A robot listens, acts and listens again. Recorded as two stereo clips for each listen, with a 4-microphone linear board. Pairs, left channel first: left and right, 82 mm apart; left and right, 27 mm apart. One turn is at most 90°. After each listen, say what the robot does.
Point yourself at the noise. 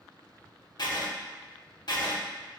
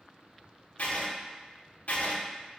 Turn 60° left.
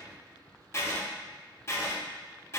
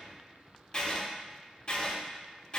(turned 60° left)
Turn 40° left.
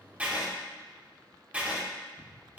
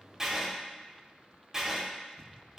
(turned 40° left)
Turn 20° right.
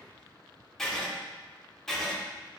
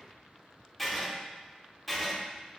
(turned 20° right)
Found it: writing, straight ahead, under 1 m away.